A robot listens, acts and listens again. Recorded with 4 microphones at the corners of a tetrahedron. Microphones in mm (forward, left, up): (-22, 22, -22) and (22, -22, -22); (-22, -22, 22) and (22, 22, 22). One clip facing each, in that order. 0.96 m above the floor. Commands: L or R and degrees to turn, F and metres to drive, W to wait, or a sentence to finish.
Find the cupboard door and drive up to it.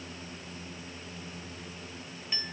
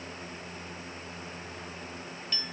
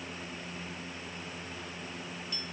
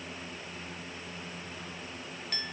W
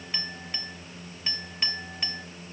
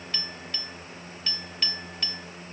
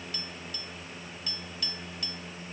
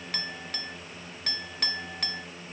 W
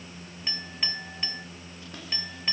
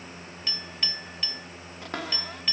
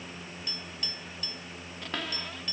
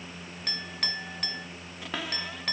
R40
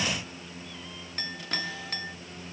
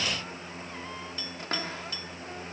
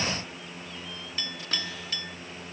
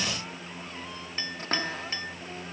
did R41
W
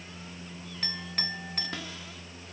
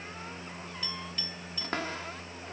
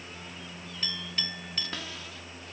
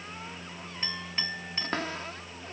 F1.0
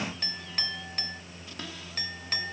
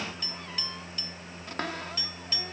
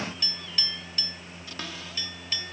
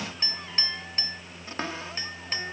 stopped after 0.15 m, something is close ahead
R10
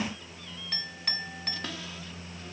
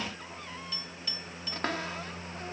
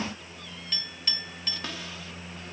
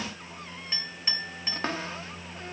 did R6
Something is in my way. I am facing the cupboard door but have not reached it.